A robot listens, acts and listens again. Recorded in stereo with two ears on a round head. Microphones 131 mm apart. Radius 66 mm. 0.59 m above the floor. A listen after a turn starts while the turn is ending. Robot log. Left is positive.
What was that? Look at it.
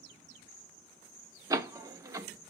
note: The door slam: about 25° right or 155° right.
cmd yaw -25
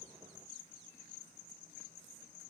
cmd idle
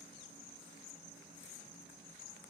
end: I heard a door slam, but can't make it out now. It was about straight ahead or 130° right.